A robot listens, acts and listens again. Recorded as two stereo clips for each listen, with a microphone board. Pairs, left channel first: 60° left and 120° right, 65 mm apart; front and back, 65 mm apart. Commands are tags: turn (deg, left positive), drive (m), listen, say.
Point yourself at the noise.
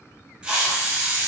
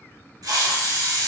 <turn deg="165"/>
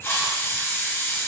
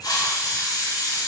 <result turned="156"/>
<turn deg="10"/>
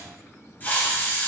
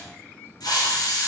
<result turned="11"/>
<say>Facing the hiss, 1 to 2 m away.</say>